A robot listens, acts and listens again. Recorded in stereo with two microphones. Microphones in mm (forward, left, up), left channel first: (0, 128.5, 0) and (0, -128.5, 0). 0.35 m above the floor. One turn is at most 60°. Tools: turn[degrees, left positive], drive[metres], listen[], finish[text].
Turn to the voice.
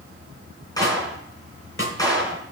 Action: listen[]
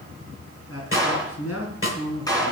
Thought: The man speaking: about 65° left or 115° left.
Action: turn[60]
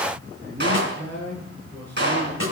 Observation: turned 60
Action: finish[Found it: a man speaking, straight ahead, over 4 m away.]